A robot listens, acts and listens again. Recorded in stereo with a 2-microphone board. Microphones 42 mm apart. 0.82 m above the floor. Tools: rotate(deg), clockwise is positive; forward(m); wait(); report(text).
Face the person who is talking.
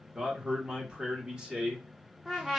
rotate(20)
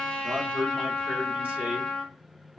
rotate(135)
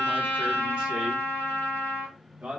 rotate(35)
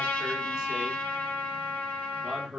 rotate(10)
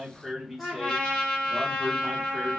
report("Found it: a man speaking, straight ahead, 1 to 2 m away.")